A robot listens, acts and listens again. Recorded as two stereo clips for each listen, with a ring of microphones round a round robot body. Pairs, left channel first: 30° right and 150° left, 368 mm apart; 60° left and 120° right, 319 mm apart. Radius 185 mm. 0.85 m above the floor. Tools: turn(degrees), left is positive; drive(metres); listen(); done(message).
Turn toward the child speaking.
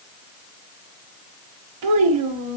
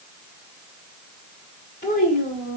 turn(degrees=130)
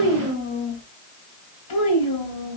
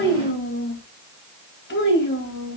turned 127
done("Facing the child speaking.")